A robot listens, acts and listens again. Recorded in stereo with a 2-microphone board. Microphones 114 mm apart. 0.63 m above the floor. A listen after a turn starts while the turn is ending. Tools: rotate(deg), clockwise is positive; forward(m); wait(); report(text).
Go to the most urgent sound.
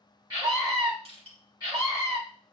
rotate(30)
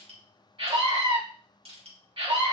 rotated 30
rotate(115)
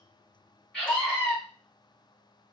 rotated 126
rotate(-10)
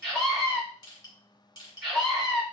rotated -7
forward(1.0)
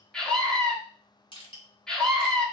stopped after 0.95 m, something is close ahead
report("I am next to the scream.")